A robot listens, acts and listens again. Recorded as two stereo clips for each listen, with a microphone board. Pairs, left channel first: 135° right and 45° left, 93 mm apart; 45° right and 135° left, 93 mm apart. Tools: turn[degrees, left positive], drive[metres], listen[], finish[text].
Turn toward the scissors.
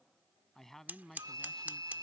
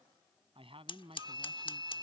Thought: The scissors: 25° right.
Action: turn[-25]
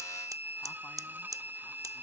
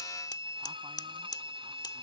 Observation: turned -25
Action: finish[Found it: scissors, straight ahead.]